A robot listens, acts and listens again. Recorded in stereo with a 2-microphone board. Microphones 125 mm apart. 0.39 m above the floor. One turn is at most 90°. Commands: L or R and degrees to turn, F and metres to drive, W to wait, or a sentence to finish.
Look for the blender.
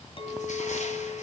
W
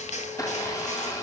L25
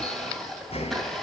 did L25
Found it: a blender, straight ahead, 2 to 4 m away.